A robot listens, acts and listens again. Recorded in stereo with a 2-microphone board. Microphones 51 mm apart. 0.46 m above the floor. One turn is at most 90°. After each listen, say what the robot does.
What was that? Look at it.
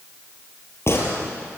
Turn 55° left.
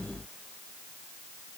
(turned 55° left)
Keep listening.
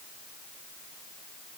I heard a gunshot, but can't make it out now. It was about straight ahead or 70° left.